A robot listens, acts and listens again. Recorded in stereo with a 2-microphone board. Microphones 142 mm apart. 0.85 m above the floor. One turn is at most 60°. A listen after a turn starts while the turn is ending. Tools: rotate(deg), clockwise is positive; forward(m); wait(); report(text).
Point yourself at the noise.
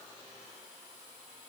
wait()
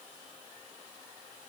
wait()
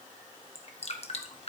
rotate(-45)
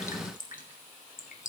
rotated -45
rotate(-60)
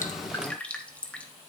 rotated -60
rotate(-10)
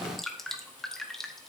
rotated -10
report("Found it: dripping, straight ahead, 1 to 2 m away.")